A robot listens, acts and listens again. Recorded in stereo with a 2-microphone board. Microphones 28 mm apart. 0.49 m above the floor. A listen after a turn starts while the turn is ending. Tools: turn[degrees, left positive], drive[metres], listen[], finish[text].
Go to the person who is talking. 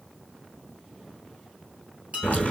Action: listen[]
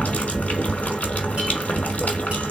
Action: listen[]
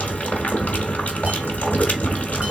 Action: finish[I can't make out anyone speaking, only dishes clattering and boiling.]